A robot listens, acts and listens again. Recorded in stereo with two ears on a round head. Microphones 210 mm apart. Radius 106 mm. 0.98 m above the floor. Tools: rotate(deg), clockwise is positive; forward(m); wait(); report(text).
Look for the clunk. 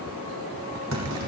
rotate(60)
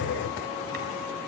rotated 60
wait()
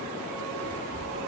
report("I heard a clunk, but can't make it out now. It was about straight ahead or 60° right.")